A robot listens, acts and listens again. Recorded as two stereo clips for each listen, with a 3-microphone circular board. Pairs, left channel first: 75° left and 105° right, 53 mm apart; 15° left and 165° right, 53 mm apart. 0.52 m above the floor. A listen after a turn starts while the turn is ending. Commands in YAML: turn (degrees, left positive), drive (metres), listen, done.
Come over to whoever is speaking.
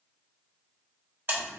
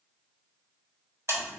listen: true
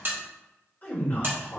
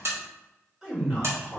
turn: 115
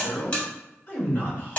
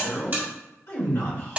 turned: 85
turn: 30
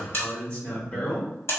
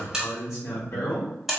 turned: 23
turn: 10
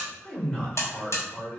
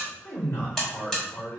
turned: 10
drive: 1.0
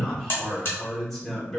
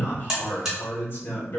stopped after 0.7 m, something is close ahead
turn: -10
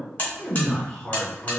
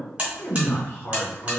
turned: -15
done: "I am next to the man speaking."